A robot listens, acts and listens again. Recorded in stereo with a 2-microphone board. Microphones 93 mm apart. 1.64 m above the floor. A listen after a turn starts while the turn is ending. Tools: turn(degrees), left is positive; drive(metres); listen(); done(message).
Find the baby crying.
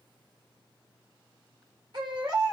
turn(degrees=-60)
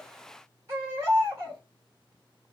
turn(degrees=-40)
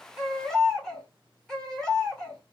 turn(degrees=10)
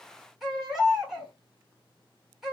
done("Facing the baby crying.")